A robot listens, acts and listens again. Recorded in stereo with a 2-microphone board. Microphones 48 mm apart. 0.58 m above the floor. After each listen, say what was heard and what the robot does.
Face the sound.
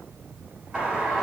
Turn 30° right.
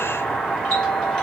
So it is at 20° left. Turn 20° left.
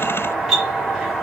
Found it: a doorbell, straight ahead.